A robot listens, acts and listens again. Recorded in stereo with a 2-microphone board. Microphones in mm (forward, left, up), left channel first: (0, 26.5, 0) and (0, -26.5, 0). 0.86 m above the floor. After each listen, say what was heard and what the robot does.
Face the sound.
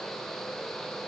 Keep listening.
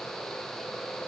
Keep listening.
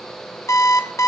The alarm clock: about 70° left or 110° left. Turn 70° left.
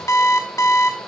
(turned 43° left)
So it is at 65° left. Turn 65° left.
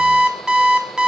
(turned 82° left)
The alarm clock is now 15° right. Turn 15° right.
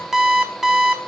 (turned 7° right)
Found it: an alarm clock, straight ahead, under 1 m away.